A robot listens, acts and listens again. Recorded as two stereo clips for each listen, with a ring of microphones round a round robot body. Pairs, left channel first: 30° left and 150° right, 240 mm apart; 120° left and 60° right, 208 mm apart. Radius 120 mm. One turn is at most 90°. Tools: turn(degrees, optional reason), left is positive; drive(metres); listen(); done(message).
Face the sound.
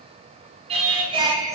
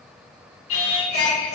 turn(degrees=90, reason="The singing: 135° left.")
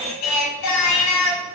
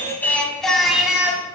turn(degrees=20, reason="The singing is now 20° left.")
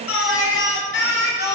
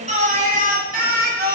turn(degrees=-20, reason="The singing is now 20° right.")
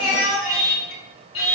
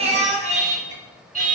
turn(degrees=-10, reason="The singing is now 10° right.")
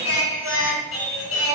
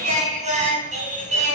done("Facing the singing, 2 to 4 m away.")